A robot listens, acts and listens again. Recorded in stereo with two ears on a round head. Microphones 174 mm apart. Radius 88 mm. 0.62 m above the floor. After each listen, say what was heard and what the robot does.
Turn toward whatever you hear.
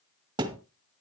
The thud: about 25° right or 155° right. Turn 25° right.
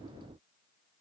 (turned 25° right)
Keep listening.
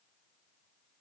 I heard a thud, but can't make it out now. It was about straight ahead or 130° right.